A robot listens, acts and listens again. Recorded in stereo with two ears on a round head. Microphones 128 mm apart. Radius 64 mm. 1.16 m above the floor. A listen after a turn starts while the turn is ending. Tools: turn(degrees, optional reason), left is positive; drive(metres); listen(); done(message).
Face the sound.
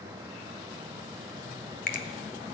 turn(degrees=60, reason="The finger snap: about 60° left or 120° left.")
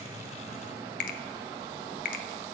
turn(degrees=60, reason="So it is at 60° left.")
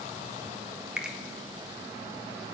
done("Facing the finger snap.")